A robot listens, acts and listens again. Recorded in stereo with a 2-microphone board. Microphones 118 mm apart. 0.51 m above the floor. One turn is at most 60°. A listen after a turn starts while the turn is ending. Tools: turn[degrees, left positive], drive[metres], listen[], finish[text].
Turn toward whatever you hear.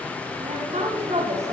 Thought: The woman speaking: about 60° right or 120° right.
Action: turn[-60]
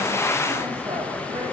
Action: listen[]
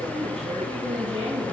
Thought: So it is at 55° right.
Action: turn[-55]
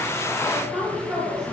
Action: finish[Found it: a woman speaking, straight ahead, 2 to 4 m away.]